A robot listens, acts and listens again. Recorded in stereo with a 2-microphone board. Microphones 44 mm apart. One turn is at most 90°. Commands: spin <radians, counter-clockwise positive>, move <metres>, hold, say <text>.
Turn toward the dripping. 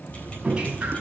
spin -0.35
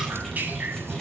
spin -1.57
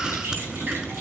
spin -0.87
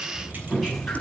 say Facing the dripping, 2 to 4 m away.